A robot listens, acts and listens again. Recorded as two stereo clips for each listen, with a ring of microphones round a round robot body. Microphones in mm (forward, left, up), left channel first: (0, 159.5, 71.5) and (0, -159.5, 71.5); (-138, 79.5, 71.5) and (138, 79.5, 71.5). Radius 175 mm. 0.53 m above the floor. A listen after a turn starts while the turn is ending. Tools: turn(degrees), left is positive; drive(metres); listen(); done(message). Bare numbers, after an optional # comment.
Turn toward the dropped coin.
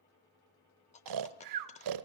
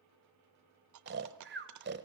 # The dropped coin: 20° left.
turn(20)
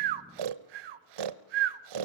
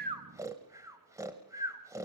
done("I heard a dropped coin from this way, but can't make it out now.")